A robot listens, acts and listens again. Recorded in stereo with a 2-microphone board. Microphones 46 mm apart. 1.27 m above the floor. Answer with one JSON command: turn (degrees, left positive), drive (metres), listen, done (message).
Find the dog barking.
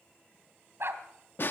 {"turn": -65}
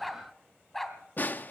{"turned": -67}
{"done": "Found it: a dog barking, straight ahead."}